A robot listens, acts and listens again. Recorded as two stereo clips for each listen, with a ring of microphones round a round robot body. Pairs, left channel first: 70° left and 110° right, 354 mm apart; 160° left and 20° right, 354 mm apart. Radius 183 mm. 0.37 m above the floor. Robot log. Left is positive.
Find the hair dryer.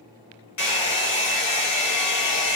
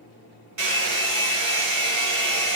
note: The hair dryer: 20° left.
cmd yaw +20
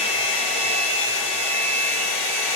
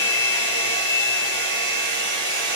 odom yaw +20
note: The hair dryer is now 10° left.
cmd yaw +10
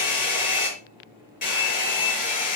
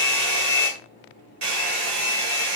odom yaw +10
end: Found it: a hair dryer, straight ahead, 2 to 4 m away.